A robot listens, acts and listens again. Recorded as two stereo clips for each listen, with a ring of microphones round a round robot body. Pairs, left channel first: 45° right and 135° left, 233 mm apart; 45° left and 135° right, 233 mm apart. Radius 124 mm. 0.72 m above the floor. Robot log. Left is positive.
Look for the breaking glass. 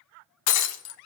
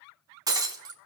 note: The breaking glass: 60° right.
cmd yaw -60
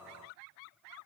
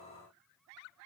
end: I heard breaking glass from this way, but can't make it out now.